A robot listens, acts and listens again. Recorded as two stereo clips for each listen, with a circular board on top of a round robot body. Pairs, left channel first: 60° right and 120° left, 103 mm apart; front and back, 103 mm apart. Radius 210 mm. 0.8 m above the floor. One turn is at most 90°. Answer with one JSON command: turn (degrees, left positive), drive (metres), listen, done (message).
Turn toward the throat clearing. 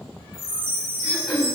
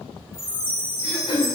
{"turn": 30}
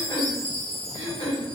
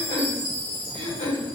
{"turn": -15}
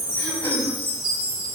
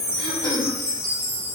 {"listen": true}
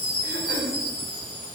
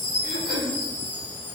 {"done": "Found it: throat clearing, straight ahead."}